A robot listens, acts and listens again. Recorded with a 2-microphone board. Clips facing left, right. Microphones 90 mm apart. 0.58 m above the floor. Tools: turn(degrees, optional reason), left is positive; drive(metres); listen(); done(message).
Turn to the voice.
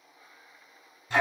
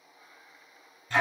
listen()
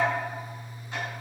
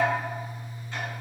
listen()
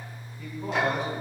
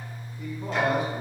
turn(degrees=-15, reason="The man speaking: about 15° right or 165° right.")
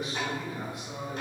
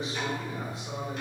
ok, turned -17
turn(degrees=-150, reason="So it is at 150° right.")
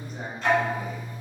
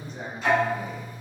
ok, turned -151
turn(degrees=10, reason="The man speaking is now 10° left.")
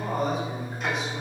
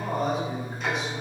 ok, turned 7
done("Found it: a man speaking, straight ahead, 1 to 2 m away.")